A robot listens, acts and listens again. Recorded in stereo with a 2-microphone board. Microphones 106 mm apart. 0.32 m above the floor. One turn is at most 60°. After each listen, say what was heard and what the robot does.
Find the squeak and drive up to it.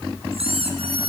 The squeak: about 65° right or 115° right. Turn 60° right.
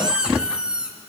So it is at 10° right. Turn 10° right.
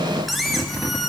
Drive 1.0 m forward.
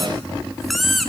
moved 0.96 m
Drive 1.0 m forward.
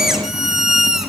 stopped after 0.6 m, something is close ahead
I am next to the squeak.